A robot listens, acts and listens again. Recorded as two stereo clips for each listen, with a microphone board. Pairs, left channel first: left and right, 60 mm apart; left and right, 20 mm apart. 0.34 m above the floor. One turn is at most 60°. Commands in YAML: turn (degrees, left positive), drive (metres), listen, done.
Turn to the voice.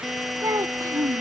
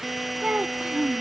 turn: -60
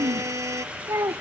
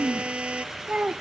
turn: -60
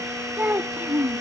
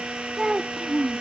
turn: -35
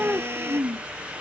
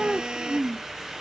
turn: -20
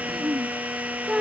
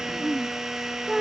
done: "Found it: a child speaking, straight ahead."